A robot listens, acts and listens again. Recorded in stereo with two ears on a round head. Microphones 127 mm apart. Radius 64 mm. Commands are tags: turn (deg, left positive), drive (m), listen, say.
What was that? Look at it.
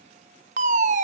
<turn deg="-55"/>
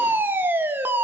<turn deg="-15"/>
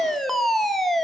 <say>Facing the fire alarm.</say>